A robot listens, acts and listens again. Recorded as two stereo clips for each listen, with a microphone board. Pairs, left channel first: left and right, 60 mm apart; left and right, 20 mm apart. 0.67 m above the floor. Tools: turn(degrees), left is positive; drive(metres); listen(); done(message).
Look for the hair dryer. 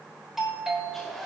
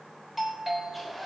turn(degrees=30)
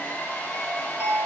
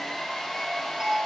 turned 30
turn(degrees=145)
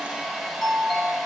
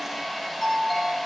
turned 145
done("Found it: a hair dryer, straight ahead, over 4 m away.")